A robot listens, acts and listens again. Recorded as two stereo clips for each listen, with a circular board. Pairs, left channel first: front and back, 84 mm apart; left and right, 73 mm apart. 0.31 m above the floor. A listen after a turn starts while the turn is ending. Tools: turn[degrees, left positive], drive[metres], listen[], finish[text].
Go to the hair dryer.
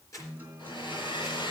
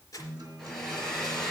Action: drive[1.0]
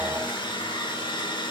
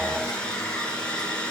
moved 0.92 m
Thought: The hair dryer is now 15° left.
Action: turn[15]
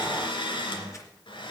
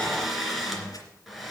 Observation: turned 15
Action: drive[1.0]
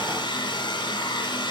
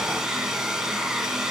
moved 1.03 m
Action: drive[1.0]
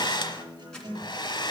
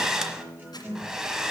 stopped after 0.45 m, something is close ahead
Thought: The hair dryer is now 10° right.
Action: turn[-10]
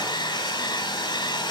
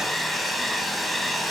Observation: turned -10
Action: finish[I am next to the hair dryer.]